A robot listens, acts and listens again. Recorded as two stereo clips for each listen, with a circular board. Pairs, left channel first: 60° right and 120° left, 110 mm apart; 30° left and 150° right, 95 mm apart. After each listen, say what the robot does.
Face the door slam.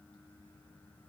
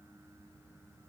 Keep listening.
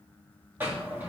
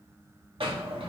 Turn 170° right.
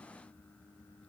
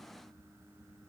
Facing where the door slam came from. I can't hear it now.